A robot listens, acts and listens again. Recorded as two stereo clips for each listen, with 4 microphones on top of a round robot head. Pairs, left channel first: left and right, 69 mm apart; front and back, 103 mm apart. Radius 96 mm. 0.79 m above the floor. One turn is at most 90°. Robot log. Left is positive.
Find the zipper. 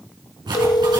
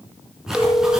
note: The zipper: 95° right.
cmd yaw -90
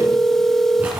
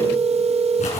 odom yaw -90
note: The zipper is now 15° right.
cmd yaw -15
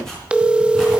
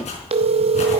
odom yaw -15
end: Found it: a zipper, straight ahead, over 4 m away.